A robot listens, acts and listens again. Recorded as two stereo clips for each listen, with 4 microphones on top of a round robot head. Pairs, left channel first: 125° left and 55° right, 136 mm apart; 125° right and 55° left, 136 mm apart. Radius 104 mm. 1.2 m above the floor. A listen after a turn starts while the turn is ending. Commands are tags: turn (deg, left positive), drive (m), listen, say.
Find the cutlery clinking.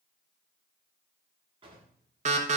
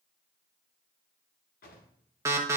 <listen/>
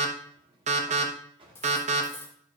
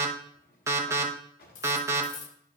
<turn deg="-160"/>
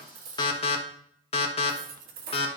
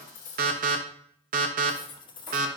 <turn deg="-65"/>
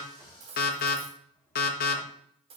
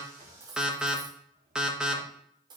<say>Facing the cutlery clinking.</say>